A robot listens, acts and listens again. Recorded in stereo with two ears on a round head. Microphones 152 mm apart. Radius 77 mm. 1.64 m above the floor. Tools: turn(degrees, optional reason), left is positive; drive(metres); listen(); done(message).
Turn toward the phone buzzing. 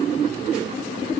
listen()
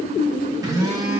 turn(degrees=-20, reason="The phone buzzing: about 20° right or 160° right.")
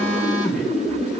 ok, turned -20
done("Facing the phone buzzing.")